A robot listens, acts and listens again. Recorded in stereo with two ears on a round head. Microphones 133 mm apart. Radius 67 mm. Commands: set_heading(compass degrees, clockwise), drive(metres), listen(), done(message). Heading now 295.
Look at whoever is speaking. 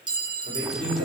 set_heading(330)
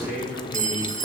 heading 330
done("Facing the man speaking.")